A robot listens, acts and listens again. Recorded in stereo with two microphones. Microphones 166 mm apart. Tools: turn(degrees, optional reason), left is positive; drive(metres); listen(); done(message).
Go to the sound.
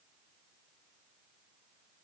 listen()
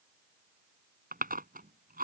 turn(degrees=-60, reason="The chewing: about 60° right or 120° right.")
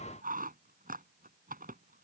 turn(degrees=-60, reason="So it is at 60° right.")
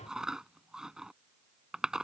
drive(metres=1.0)
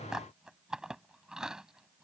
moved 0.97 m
drive(metres=1.0)
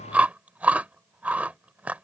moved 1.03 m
turn(degrees=-10, reason="The chewing is now 10° right.")
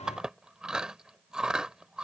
drive(metres=1.0)
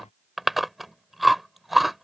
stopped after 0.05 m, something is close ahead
done("Arrived at the chewing, straight ahead.")